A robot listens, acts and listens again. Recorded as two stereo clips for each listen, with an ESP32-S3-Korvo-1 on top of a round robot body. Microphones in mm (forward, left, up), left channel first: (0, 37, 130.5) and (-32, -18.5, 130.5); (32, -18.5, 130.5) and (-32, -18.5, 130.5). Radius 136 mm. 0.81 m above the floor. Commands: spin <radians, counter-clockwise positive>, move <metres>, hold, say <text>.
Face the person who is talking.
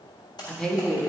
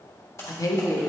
spin -0.44
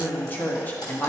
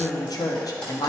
say Found it: a woman speaking, straight ahead, 1 to 2 m away.